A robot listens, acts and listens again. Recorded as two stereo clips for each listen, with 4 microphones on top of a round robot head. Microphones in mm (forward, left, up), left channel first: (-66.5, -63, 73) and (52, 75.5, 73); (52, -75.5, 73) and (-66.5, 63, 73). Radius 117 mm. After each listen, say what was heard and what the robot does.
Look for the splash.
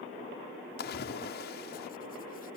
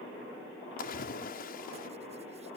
The splash: 90° right. Turn 90° right.
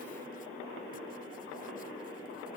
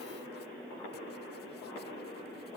I heard a splash from this way, but can't make it out now.